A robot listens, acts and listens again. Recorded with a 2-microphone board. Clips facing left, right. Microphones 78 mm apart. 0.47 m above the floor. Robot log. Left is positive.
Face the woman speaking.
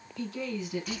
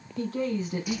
note: The woman speaking: about 40° right or 140° right.
cmd yaw -40
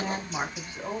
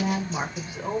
end: Found it: a woman speaking, straight ahead, 1 to 2 m away.